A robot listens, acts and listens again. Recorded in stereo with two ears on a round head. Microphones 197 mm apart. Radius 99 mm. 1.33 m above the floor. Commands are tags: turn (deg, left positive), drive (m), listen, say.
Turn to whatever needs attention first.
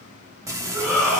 <turn deg="-30"/>
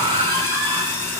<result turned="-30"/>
<turn deg="-145"/>
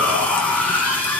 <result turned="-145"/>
<turn deg="10"/>
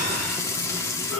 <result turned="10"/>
<say>Found it: a shout, straight ahead.</say>